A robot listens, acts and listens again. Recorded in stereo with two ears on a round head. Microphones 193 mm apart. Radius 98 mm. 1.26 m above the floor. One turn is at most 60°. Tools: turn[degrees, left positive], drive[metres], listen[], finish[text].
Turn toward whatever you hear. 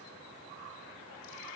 Action: listen[]
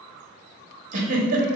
Thought: The giggle: about 40° right or 140° right.
Action: turn[-40]
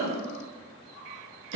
Thought: So it is at 95° right.
Action: turn[-60]
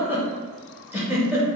Thought: The giggle is now 10° right.
Action: turn[-10]
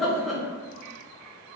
Action: finish[Facing the giggle, 1 to 2 m away.]